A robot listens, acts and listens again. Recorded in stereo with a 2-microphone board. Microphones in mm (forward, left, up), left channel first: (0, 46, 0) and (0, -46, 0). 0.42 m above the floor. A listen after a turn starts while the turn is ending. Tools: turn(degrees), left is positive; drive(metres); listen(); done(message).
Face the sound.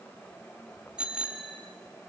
turn(degrees=-30)
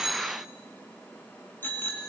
turn(degrees=25)
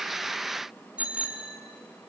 turn(degrees=-10)
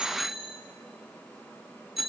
done("Facing the bicycle bell, 2 to 4 m away.")